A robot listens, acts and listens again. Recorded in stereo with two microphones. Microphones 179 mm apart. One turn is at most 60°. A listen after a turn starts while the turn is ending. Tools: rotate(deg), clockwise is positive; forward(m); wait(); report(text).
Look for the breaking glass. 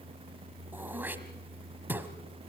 wait()
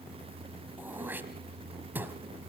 wait()
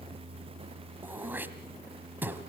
report("I can't make out breaking glass, only throat clearing.")